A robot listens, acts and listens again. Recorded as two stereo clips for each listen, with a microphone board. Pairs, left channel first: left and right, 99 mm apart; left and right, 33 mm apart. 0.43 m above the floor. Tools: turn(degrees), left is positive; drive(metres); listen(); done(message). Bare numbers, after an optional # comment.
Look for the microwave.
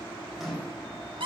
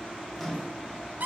turn(30)
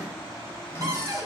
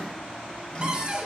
listen()
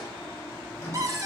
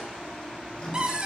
# So it is at 150° left.
turn(150)
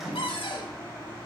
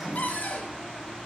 done("Found it: a microwave, straight ahead, 1 to 2 m away.")